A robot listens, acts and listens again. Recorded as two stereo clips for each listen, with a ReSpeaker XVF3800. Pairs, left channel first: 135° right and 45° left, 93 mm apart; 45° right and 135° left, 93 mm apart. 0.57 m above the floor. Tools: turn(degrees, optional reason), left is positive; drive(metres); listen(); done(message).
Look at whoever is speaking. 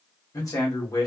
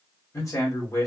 turn(degrees=-90, reason="The man speaking: 90° right.")
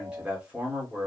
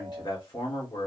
turn(degrees=-30, reason="The man speaking is now 30° right.")
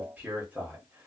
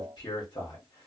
turn(degrees=-25, reason="The man speaking is now 25° right.")
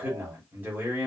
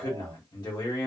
turn(degrees=-20, reason="The man speaking is now 20° right.")
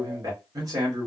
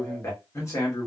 done("Facing the man speaking, 1 to 2 m away.")